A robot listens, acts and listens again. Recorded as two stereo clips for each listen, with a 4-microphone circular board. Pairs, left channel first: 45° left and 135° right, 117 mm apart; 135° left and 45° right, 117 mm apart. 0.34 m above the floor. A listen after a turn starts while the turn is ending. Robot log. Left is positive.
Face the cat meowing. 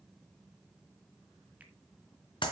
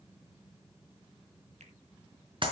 cmd idle
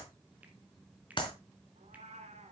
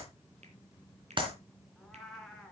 note: The cat meowing: 140° right.
cmd yaw -140
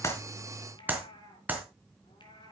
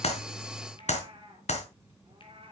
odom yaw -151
end: Found it: a cat meowing, straight ahead, 2 to 4 m away.